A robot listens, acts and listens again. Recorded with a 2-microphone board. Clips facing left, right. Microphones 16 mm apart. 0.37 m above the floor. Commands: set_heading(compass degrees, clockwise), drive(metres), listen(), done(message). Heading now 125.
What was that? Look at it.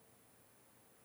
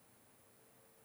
listen()
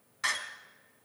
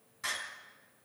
set_heading(90)
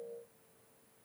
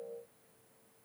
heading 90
listen()
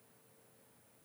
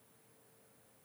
done("I heard a door slam, but can't make it out now. It was about straight ahead or 110° left.")